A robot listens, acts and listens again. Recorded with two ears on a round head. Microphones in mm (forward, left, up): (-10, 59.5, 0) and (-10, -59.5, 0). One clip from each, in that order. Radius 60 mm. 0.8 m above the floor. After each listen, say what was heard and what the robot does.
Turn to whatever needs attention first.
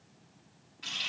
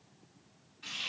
Keep listening.
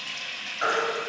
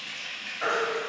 The baby crying: about 20° left or 160° left. Turn 20° left.
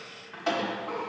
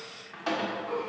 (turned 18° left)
So it is at 145° left. Turn 145° left.
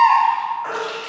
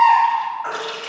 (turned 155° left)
The baby crying is now 15° right. Turn 15° right.
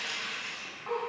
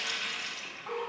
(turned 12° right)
Keep listening.
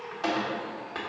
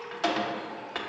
Keep listening.
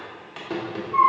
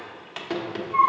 Facing the baby crying, 1 to 2 m away.